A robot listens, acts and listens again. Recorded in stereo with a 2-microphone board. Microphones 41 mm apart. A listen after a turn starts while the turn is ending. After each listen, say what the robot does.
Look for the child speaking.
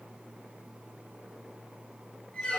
Keep listening.
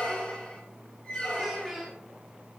Turn 30° left.
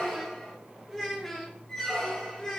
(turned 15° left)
Turn 15° left.
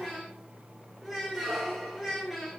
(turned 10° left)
Turn 30° left.
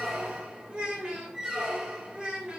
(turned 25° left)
Turn 15° right.
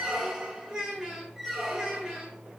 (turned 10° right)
Facing the child speaking, 2 to 4 m away.